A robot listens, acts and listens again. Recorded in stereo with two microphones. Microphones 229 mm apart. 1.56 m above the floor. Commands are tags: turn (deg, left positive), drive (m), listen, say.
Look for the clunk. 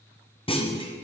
<turn deg="25"/>
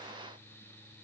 <listen/>
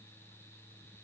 <say>I heard a clunk, but can't make it out now. It was about straight ahead or 130° left.</say>